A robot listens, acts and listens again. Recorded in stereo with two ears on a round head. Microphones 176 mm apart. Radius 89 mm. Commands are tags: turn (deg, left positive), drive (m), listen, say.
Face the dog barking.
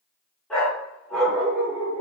<turn deg="30"/>
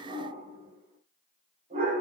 <turn deg="-35"/>
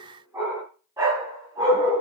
<turn deg="-20"/>
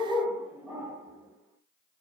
<turn deg="-10"/>
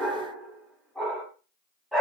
<say>Found it: a dog barking, straight ahead, 2 to 4 m away.</say>